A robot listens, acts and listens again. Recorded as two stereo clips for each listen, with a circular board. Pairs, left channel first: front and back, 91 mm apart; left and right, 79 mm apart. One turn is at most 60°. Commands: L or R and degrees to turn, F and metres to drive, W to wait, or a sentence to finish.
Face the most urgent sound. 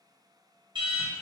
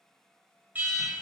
R60
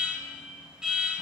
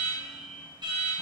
R60
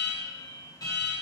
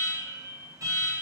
R45
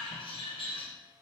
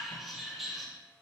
Found it: an alarm, straight ahead, 1 to 2 m away.